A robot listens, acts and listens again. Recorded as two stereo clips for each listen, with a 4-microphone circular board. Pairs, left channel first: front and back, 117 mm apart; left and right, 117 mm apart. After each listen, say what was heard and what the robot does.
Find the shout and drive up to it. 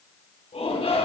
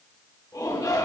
The shout: 30° left. Turn 30° left.
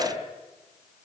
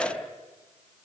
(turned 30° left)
The shout is now 10° left. Turn 10° left.
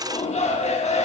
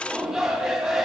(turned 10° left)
Drive 1.0 m forward.
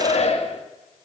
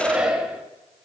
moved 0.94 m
The shout is now 10° right. Turn 10° right.
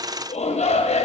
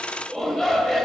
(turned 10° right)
Drive 1.0 m forward.
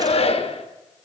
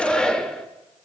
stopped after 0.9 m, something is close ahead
The shout is now 10° left. Turn 10° left.
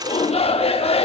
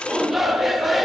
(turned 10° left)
Arrived at the shout, straight ahead.